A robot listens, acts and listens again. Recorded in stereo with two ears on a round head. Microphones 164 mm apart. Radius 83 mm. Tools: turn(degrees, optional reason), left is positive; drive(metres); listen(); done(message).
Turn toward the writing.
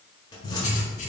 turn(degrees=40, reason="The writing: about 40° left or 140° left.")
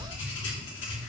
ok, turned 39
turn(degrees=100, reason="So it is at 100° left.")
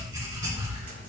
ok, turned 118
turn(degrees=-15, reason="The writing is now 15° right.")
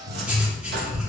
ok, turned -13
done("Facing the writing, 2 to 4 m away.")